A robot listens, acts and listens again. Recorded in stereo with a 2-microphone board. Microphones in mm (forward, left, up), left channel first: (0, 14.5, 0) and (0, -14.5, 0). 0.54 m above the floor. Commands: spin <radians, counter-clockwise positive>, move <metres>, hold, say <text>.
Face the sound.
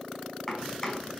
spin 0.52
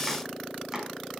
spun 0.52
spin -0.26
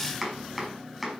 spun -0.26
say Found it: chopping, straight ahead.